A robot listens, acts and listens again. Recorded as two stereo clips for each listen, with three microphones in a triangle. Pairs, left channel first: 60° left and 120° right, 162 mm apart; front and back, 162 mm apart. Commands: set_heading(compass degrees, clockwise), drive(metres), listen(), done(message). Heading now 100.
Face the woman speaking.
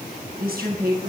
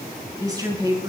set_heading(215)
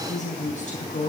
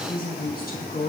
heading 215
set_heading(195)
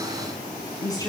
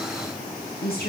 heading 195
done("Found it: a woman speaking, straight ahead, over 4 m away.")